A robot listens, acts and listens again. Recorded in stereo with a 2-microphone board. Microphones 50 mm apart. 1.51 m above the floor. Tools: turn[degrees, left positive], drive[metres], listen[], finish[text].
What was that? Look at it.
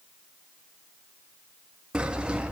Thought: The sawing: about 20° right or 160° right.
Action: turn[-20]
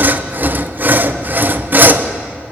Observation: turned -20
Thought: So it is at 140° right.
Action: turn[-140]
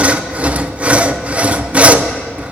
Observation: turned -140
Thought: The sawing is now 25° right.
Action: turn[-25]
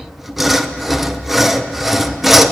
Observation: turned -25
Action: finish[Found it: sawing, straight ahead.]